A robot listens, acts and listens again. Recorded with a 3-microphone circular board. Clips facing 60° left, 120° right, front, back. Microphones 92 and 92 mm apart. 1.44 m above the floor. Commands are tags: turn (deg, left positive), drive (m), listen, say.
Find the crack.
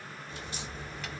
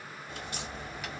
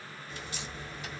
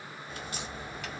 <turn deg="-145"/>
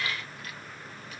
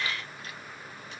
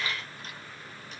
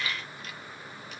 <say>Facing where the crack came from. I can't hear it now.</say>